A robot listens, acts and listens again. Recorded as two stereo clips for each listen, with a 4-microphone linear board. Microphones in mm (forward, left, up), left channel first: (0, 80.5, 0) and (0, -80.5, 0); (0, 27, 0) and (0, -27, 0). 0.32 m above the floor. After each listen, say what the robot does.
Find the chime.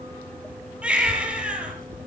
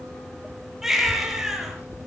Keep listening.
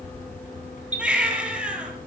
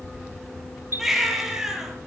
Turn 45° right.
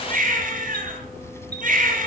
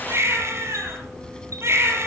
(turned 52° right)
Keep listening.
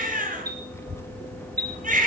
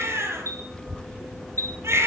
Turn 80° right.
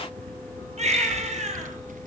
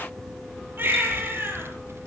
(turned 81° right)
Keep listening.
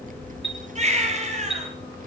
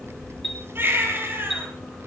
Found it: a chime, straight ahead.